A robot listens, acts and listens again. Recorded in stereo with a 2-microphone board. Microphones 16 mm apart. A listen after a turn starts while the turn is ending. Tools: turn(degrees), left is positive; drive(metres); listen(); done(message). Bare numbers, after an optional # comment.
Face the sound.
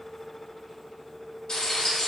# The frying: about 55° left or 125° left.
turn(55)
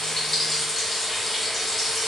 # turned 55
done("Found it: frying, straight ahead, 1 to 2 m away.")